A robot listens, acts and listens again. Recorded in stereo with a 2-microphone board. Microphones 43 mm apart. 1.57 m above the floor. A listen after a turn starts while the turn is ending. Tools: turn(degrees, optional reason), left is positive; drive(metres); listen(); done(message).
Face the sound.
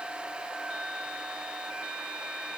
listen()
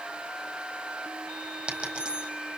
turn(degrees=-25, reason="The dropped coin: about 25° right or 155° right.")
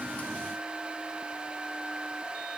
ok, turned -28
listen()
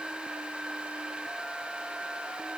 done("I heard a dropped coin, but can't make it out now. It was about 5° left or 130° right.")